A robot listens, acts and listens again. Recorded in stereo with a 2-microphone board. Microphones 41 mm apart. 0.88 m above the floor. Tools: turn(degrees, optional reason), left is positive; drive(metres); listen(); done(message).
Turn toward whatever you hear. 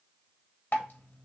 turn(degrees=60, reason="The dripping: about 60° left or 120° left.")
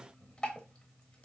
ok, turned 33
turn(degrees=30, reason="So it is at 30° left.")
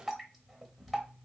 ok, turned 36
done("Facing the dripping.")